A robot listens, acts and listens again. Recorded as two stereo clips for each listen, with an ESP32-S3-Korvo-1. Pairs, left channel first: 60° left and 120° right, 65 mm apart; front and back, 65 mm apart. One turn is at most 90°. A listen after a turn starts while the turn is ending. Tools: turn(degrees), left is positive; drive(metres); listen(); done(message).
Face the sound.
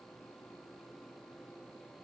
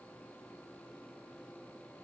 listen()
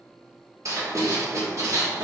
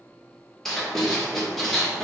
turn(degrees=-85)
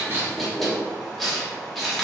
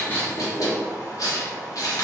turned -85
turn(degrees=-30)
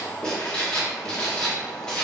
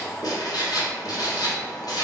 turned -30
turn(degrees=-20)
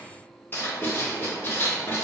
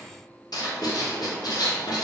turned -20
done("Found it: writing, straight ahead.")